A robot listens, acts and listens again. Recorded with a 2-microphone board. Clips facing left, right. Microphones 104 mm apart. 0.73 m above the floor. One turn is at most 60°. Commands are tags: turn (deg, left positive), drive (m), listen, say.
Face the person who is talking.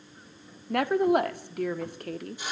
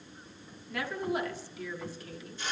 <turn deg="60"/>
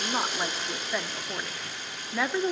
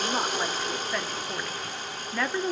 <say>Found it: a woman speaking, straight ahead, 1 to 2 m away.</say>